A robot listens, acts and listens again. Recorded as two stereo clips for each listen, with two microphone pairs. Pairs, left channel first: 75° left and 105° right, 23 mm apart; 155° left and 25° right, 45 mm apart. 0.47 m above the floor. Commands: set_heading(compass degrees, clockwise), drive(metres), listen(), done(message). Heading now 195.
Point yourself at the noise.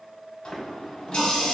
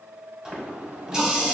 set_heading(160)
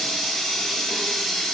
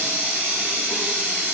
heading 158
done("Found it: a running tap, straight ahead, 1 to 2 m away.")